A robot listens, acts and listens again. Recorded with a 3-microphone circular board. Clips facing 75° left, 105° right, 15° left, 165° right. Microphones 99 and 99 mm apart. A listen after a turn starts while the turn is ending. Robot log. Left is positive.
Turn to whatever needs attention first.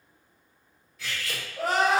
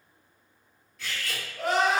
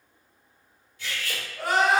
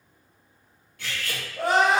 note: The crying: 130° left.
cmd yaw +130
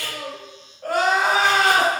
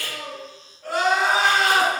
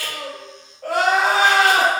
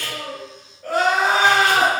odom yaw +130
note: The crying is now 35° left.
cmd yaw +35
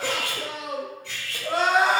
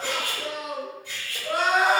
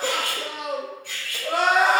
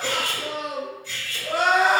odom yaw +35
note: The crying is now 15° left.
cmd yaw +15
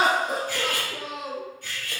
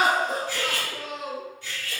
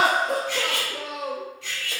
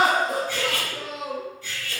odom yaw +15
end: Facing the crying.